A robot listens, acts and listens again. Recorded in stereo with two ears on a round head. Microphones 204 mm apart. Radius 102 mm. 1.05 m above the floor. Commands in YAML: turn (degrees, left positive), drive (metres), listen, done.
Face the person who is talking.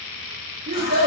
turn: -30
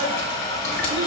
listen: true
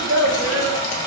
turn: -120
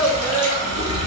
done: "Facing the child speaking, 1 to 2 m away."